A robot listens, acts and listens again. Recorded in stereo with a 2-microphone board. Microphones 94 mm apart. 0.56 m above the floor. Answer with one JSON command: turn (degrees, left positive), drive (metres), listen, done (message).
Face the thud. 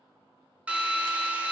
{"listen": true}
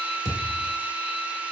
{"turn": 30}
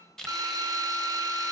{"listen": true}
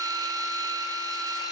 {"done": "I heard a thud, but can't make it out now. It was about straight ahead or 120° left."}